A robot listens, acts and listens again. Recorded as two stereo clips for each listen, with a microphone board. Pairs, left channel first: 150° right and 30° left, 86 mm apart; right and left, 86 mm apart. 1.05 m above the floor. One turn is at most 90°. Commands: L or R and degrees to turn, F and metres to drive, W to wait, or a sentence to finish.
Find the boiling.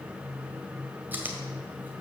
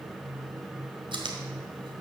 W
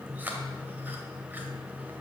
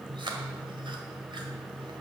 W
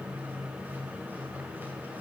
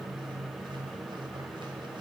I can't make out boiling, only chewing.